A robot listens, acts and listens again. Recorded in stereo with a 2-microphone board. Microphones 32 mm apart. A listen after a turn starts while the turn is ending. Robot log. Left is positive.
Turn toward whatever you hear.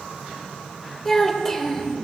cmd yaw +30
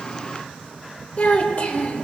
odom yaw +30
note: So it is at 135° left.
cmd yaw +135
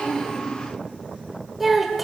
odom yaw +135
end: Facing the child speaking, 1 to 2 m away.